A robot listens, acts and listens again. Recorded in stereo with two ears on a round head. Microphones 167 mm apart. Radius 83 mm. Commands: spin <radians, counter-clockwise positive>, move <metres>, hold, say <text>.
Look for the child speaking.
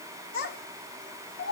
spin 0.96
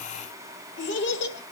spin 1.13
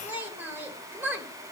spin -0.17
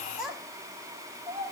say Found it: a child speaking, straight ahead.